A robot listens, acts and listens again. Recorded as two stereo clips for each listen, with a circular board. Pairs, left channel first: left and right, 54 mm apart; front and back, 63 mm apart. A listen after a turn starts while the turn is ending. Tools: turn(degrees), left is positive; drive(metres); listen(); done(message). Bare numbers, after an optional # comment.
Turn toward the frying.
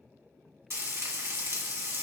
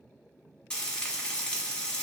# The frying: 75° right.
turn(-75)
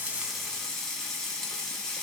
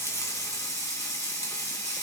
# The frying is now 15° left.
turn(15)
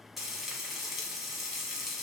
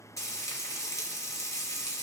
done("Facing the frying.")